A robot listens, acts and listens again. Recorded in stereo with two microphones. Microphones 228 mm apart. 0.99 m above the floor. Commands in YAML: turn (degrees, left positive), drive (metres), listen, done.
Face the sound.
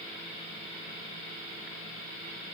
listen: true
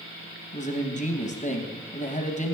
turn: 35
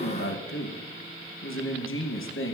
turn: 110
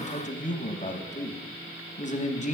turn: 35
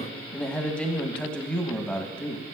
done: "Found it: a man speaking, straight ahead, under 1 m away."